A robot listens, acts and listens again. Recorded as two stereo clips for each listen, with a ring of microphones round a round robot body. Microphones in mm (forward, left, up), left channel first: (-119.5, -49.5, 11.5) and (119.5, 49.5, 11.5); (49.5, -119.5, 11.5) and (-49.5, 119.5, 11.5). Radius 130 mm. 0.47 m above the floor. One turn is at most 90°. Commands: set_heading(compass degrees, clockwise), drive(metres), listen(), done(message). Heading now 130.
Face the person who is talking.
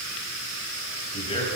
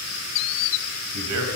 set_heading(40)
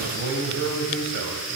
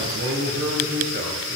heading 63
set_heading(358)
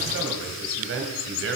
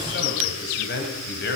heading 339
set_heading(359)
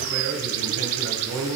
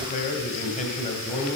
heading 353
done("Facing the man speaking, 2 to 4 m away.")